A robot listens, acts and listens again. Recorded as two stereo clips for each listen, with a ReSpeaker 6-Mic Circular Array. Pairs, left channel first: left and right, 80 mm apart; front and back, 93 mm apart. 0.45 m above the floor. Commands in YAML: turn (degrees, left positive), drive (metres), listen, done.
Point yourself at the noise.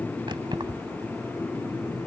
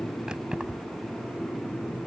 turn: -100
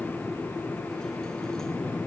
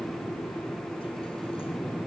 listen: true
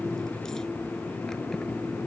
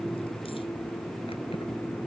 listen: true
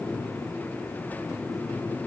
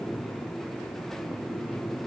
done: "Facing where the keys jangling came from. I can't hear it now."